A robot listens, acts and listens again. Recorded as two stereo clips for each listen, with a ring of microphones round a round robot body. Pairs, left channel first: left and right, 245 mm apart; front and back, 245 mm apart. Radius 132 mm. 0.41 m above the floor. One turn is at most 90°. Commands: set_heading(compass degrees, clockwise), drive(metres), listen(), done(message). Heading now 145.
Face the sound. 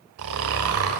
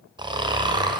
set_heading(235)
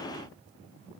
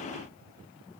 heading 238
set_heading(258)
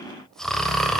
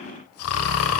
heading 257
done("Found it: snoring, straight ahead, 1 to 2 m away.")